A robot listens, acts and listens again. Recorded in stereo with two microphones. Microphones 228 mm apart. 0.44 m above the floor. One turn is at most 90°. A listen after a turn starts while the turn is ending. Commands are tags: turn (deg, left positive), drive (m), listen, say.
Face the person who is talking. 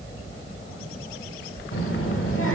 <turn deg="65"/>
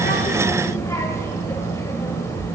<turn deg="15"/>
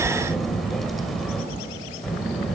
<say>Facing the child speaking, 1 to 2 m away.</say>